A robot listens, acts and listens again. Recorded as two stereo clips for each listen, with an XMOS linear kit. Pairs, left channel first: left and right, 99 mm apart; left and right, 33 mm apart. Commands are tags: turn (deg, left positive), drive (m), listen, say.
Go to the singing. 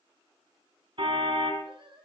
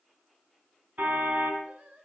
<turn deg="-55"/>
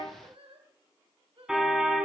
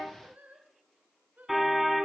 <turn deg="-70"/>
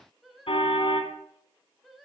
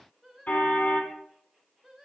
<drive m="1.0"/>
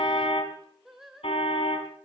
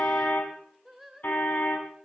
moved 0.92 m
<drive m="1.0"/>
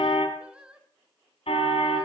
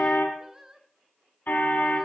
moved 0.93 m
<turn deg="-10"/>
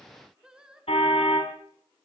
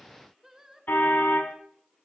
<turn deg="-10"/>
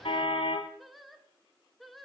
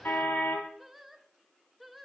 <drive m="1.0"/>
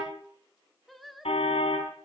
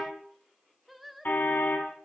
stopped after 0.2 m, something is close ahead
<say>I am next to the singing.</say>